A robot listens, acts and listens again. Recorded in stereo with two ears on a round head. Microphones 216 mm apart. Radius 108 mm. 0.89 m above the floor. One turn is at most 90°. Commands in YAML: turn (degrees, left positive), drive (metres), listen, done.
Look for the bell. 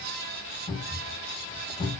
listen: true
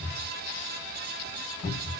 listen: true
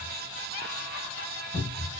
done: "I can't make out a bell, only a cupboard door."